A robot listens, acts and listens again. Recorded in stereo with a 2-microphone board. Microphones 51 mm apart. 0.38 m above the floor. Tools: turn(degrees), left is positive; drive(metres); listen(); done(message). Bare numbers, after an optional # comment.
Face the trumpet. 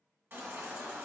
listen()
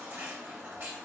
listen()
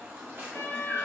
# The trumpet: about 60° left or 120° left.
turn(60)
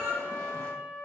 # So it is at 60° left.
turn(60)
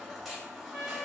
# The trumpet is now 10° right.
turn(-10)
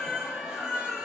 listen()
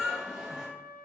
done("Facing the trumpet, 1 to 2 m away.")